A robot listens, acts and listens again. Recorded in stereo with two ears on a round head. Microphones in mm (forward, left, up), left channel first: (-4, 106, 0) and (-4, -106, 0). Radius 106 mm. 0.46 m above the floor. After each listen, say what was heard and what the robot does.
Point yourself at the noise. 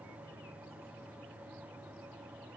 Keep listening.
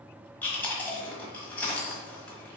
Turn 30° left.
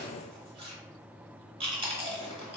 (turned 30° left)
So it is at 25° right. Turn 25° right.
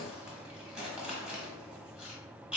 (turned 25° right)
Facing the chewing, 1 to 2 m away.